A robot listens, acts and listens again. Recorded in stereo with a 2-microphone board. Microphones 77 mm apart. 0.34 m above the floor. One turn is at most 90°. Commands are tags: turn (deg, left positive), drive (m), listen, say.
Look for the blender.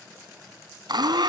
<turn deg="-70"/>
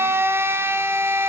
<turn deg="-35"/>
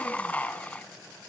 <turn deg="20"/>
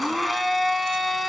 <say>Facing the blender, 1 to 2 m away.</say>